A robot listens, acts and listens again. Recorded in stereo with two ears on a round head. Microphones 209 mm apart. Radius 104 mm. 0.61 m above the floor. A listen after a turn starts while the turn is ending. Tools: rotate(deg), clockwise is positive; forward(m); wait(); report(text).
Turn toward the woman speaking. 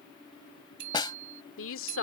rotate(-60)
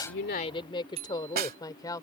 rotate(-15)
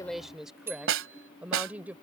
report("Found it: a woman speaking, straight ahead.")